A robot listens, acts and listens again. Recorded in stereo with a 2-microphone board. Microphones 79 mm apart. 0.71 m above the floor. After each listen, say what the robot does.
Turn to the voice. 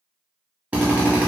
Keep listening.
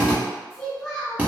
Turn 30° left.
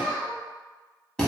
Turn 25° right.
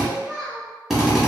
Turn 10° right.
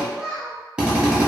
Facing the child speaking, under 1 m away.